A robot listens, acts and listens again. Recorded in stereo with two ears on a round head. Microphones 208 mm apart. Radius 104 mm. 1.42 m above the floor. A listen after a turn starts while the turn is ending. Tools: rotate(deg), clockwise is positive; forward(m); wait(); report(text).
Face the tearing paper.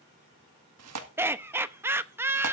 rotate(90)
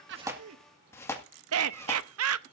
rotate(-10)
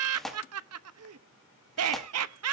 report("Facing the tearing paper.")